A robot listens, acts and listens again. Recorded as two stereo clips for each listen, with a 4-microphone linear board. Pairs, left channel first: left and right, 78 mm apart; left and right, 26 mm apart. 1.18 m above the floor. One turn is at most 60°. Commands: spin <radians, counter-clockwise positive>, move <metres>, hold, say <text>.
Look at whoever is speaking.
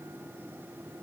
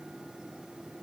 hold
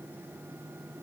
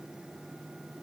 hold
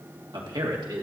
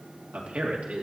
spin -1.05
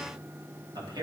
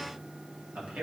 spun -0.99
spin -1.05
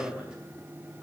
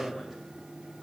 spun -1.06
spin -0.17
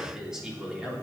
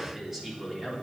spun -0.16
spin -0.17
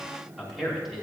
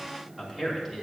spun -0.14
say Facing the man speaking.